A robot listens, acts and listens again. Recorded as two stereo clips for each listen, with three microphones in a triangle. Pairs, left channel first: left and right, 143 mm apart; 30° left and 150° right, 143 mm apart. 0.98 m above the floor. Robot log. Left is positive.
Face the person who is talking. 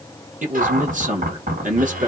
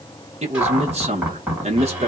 note: The man speaking: 110° right.
cmd yaw -110
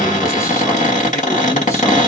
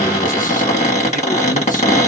cmd idle
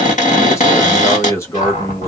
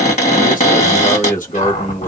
note: The man speaking is now 20° left.
cmd yaw +20
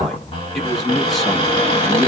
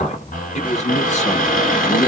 end: Facing the man speaking, under 1 m away.